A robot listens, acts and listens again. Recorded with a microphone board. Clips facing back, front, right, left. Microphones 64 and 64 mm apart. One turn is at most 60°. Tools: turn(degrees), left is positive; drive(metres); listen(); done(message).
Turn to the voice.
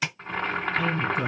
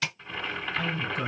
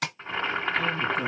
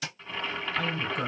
turn(degrees=60)
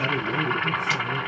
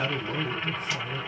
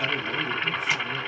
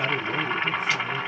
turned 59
turn(degrees=30)
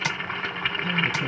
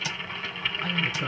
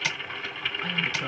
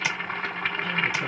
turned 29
done("Found it: a woman speaking, straight ahead, 1 to 2 m away.")